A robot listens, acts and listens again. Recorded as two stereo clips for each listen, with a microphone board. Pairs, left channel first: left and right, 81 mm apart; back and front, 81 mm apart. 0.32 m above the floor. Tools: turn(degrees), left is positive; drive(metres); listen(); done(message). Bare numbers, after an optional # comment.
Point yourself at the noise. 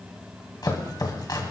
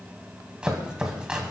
# The chopping: 75° left.
turn(75)
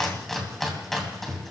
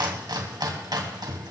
done("Found it: chopping, straight ahead.")